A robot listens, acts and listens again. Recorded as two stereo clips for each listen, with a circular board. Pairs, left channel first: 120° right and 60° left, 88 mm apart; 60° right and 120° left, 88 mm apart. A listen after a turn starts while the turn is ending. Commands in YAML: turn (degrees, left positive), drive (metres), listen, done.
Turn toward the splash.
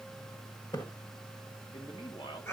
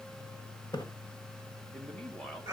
turn: -95
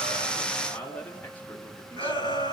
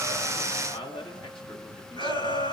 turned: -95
done: "Facing where the splash came from. I can't hear it now."